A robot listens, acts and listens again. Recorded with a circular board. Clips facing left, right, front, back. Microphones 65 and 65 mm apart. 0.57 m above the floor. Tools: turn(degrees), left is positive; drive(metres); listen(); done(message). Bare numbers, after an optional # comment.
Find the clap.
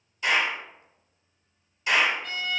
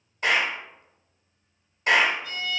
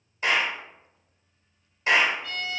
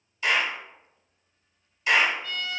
# The clap: 50° right.
turn(-50)
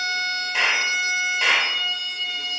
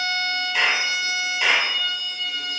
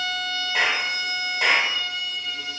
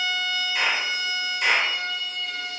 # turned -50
# The clap is now 15° left.
turn(15)
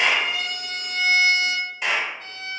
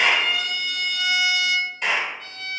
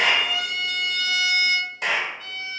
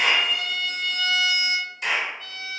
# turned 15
done("Facing the clap, 1 to 2 m away.")